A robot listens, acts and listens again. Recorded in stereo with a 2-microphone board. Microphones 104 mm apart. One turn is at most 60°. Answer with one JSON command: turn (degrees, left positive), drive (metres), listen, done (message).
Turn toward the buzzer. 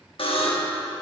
{"turn": 60}
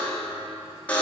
{"turn": 15}
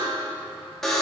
{"done": "Facing the buzzer, 1 to 2 m away."}